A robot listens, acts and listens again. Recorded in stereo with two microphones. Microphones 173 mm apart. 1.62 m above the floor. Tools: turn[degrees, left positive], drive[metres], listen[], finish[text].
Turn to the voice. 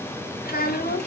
Thought: The child speaking: about 60° left or 120° left.
Action: turn[60]
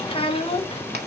Thought: So it is at 35° left.
Action: turn[35]
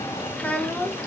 Thought: The child speaking is now 10° left.
Action: turn[10]
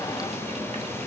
Action: listen[]
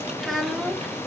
Action: finish[Found it: a child speaking, straight ahead, 1 to 2 m away.]